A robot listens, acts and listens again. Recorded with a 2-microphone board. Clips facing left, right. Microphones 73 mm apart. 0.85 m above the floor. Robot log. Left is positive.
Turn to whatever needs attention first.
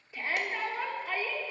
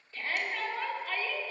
cmd yaw +30
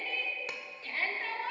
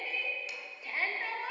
note: So it is at 15° right.
cmd yaw -15
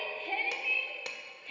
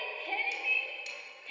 end: Found it: a shout, straight ahead.